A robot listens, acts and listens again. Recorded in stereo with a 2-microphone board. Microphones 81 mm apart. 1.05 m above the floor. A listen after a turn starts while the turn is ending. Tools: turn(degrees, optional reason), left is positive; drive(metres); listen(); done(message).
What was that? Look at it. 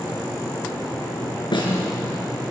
turn(degrees=90)
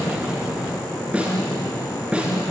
turn(degrees=-15, reason="So it is at 15° right.")
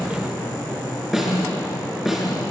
done("Found it: a snare drum, straight ahead, over 4 m away.")